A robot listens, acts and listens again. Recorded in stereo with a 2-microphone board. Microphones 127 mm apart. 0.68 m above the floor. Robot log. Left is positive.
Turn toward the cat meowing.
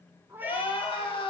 note: The cat meowing: about 15° right or 165° right.
cmd yaw -15
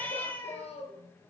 note: So it is at 20° left.
cmd yaw +20
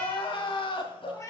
note: The cat meowing is now 25° left.
cmd yaw +25
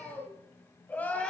cmd idle
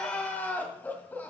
cmd idle
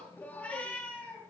note: The cat meowing is now 10° left.
cmd yaw +10
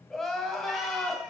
cmd idle
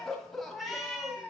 end: Found it: a cat meowing, straight ahead, 2 to 4 m away.